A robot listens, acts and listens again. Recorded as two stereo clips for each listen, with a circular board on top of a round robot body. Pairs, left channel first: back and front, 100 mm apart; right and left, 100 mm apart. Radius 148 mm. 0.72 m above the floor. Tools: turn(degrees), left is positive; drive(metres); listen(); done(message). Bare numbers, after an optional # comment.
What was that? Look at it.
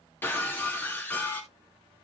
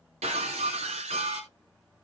# The breaking glass: 110° left.
turn(110)
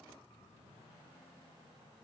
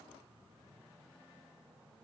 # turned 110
done("Facing where the breaking glass came from. I can't hear it now.")